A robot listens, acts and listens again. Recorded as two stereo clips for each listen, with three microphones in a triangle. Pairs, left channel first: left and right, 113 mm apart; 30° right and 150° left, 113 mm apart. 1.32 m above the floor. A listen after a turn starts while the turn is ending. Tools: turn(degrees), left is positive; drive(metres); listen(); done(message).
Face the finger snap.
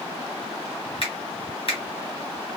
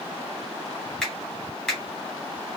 turn(degrees=55)
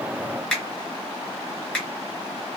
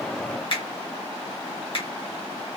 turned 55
done("Found it: a finger snap, straight ahead, 1 to 2 m away.")